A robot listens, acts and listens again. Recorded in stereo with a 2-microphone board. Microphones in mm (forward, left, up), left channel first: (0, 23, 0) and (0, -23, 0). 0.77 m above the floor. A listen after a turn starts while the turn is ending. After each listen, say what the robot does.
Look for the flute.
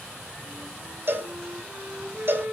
Turn 50° right.
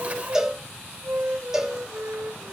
Turn 80° right.
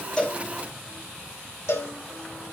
Keep listening.
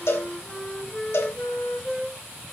Found it: a flute, straight ahead, 2 to 4 m away.